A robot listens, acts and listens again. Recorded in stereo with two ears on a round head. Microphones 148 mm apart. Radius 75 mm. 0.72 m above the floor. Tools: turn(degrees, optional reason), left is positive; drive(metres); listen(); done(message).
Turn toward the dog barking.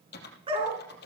turn(degrees=-35, reason="The dog barking: about 35° right or 145° right.")
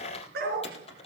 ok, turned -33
turn(degrees=-110, reason="So it is at 110° right.")
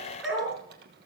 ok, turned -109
done("Found it: a dog barking, straight ahead, over 4 m away.")